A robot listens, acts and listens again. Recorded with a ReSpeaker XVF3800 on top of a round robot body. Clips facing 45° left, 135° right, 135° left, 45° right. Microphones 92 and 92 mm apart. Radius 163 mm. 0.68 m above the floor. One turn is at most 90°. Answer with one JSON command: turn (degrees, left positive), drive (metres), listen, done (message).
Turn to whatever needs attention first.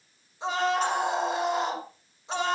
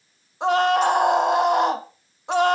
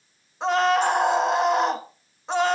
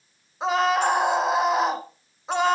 {"turn": -90}
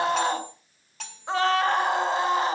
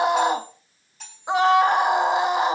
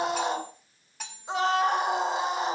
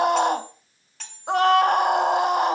{"turn": -65}
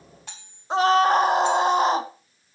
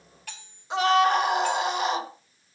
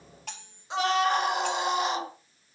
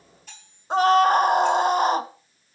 {"done": "Found it: a scream, straight ahead, 2 to 4 m away."}